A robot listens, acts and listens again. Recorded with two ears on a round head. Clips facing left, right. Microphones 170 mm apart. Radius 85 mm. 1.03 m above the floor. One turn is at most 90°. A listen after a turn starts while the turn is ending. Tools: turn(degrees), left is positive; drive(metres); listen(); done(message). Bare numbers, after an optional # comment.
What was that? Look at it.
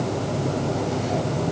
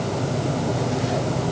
listen()
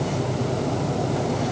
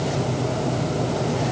listen()
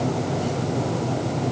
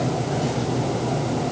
done("I can't make out anything.")